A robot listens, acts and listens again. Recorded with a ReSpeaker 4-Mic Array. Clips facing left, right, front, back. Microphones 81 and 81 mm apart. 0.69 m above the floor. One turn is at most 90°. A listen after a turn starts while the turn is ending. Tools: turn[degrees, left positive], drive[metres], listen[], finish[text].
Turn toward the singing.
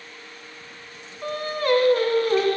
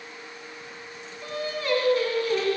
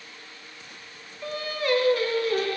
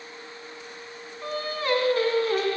Thought: The singing: 130° left.
Action: turn[90]
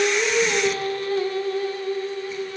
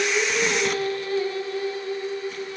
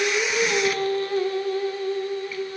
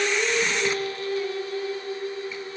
Thought: The singing is now 50° left.
Action: turn[50]
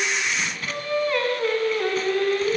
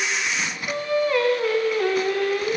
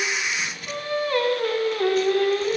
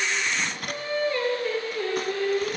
Action: finish[Facing the singing.]